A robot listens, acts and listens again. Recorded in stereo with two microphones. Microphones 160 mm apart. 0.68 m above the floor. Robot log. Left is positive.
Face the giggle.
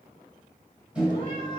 cmd idle
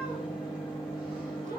cmd idle
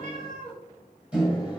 end: I can't make out a giggle, only a microwave and a cat meowing.